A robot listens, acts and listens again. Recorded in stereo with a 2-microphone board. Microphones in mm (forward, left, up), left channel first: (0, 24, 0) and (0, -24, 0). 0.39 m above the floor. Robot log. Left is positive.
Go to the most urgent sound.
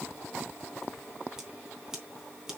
cmd idle
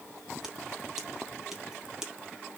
cmd idle
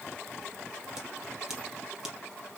end: I can't make out anything urgent, only scissors.